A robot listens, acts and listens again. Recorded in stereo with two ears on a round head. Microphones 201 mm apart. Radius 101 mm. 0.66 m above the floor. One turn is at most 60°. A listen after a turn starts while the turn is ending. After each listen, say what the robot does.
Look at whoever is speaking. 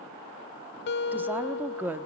Turn 30° right.
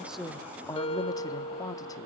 Turn 20° left.
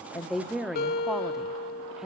Facing the woman speaking.